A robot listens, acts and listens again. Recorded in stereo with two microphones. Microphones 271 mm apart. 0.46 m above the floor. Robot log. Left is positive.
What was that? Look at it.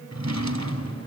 cmd yaw -90
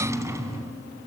note: So it is at 10° right.
cmd yaw -10
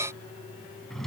end: Facing the drawer.